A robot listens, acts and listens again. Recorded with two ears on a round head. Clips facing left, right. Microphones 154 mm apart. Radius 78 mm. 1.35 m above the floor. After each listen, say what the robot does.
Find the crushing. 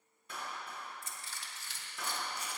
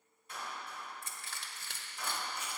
Turn 50° right.
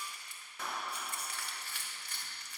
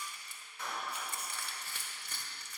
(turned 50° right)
Turn 80° right.
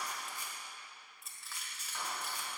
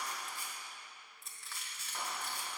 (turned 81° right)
Facing the crushing, 1 to 2 m away.